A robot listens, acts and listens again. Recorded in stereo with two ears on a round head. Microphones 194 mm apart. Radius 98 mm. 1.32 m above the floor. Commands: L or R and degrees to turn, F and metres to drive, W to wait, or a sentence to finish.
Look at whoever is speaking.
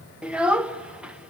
R30
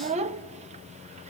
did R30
R145
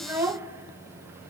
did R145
R10
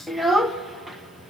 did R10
Facing the child speaking.